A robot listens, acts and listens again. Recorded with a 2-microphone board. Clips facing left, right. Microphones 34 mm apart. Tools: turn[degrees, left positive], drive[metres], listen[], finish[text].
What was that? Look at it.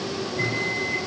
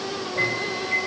Thought: The microwave: about 50° right or 130° right.
Action: turn[-50]
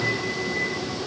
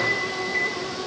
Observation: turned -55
Thought: So it is at 70° right.
Action: turn[-70]
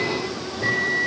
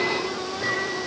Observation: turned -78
Action: finish[Facing the microwave, over 4 m away.]